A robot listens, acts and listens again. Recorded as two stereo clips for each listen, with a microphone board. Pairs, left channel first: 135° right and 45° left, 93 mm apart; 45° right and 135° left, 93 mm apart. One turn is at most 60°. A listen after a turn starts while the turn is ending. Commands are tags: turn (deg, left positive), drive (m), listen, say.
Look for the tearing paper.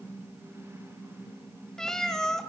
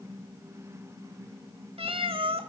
<listen/>
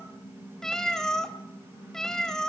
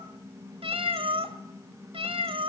<listen/>
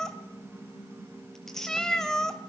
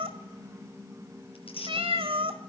<turn deg="-50"/>
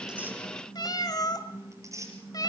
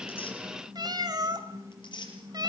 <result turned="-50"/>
<turn deg="-10"/>
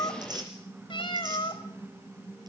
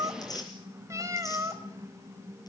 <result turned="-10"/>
<say>Found it: tearing paper, straight ahead.</say>